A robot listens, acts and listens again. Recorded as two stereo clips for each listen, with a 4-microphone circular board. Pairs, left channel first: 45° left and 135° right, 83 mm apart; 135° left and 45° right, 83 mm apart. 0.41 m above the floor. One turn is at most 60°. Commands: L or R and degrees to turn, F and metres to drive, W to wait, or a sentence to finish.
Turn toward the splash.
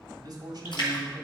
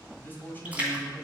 L25
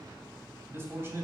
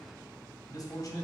I heard a splash from this way, but can't make it out now.